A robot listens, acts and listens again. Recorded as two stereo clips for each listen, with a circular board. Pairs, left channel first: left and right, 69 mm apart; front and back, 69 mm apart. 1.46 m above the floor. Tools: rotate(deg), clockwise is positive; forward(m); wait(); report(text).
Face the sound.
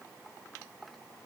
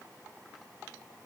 wait()
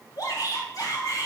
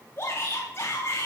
rotate(-55)
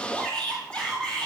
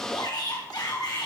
rotate(-15)
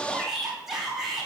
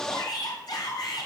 report("Facing the shout.")